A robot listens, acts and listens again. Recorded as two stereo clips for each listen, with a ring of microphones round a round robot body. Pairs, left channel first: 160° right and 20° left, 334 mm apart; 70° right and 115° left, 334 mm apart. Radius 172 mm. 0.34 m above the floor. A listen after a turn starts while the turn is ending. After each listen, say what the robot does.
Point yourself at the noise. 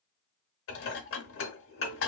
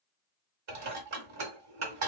Turn 155° left.
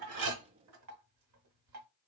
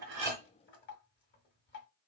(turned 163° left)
Turn 10° right.
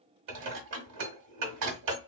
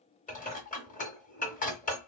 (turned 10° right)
Found it: dishes clattering, straight ahead, 1 to 2 m away.